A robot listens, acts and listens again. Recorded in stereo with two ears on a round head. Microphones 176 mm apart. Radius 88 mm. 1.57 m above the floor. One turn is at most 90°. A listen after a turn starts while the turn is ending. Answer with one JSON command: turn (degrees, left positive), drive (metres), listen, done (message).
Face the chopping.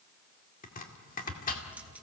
{"turn": 40}
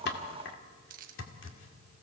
{"turn": 90}
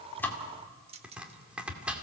{"done": "Found it: chopping, straight ahead, 2 to 4 m away."}